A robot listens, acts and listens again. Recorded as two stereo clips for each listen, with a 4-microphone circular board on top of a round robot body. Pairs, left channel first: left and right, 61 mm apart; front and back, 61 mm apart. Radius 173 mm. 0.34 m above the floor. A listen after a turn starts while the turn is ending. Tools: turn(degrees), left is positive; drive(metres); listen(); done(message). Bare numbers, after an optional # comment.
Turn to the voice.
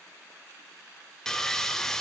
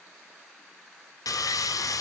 listen()
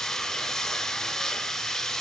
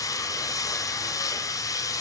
listen()
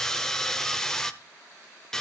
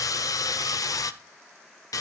done("I can't make out anyone speaking, only sawing.")